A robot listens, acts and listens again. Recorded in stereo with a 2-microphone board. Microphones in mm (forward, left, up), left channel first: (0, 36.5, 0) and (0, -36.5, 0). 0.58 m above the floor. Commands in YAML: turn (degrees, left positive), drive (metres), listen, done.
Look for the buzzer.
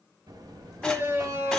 turn: -75
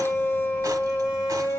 done: "Facing the buzzer, 1 to 2 m away."